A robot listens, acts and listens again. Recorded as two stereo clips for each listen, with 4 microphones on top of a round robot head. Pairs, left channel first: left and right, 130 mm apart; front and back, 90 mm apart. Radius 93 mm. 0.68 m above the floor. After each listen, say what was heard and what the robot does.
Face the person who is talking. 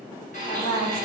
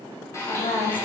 The woman speaking: 20° left. Turn 20° left.
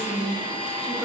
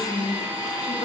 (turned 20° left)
Facing the woman speaking, 2 to 4 m away.